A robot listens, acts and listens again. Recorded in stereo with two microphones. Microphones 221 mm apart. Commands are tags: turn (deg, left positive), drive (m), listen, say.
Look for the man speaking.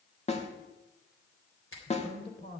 <turn deg="50"/>
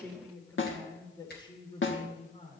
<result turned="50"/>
<turn deg="30"/>
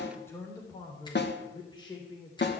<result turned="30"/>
<turn deg="20"/>
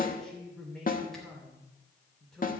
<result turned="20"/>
<say>Facing the man speaking, 2 to 4 m away.</say>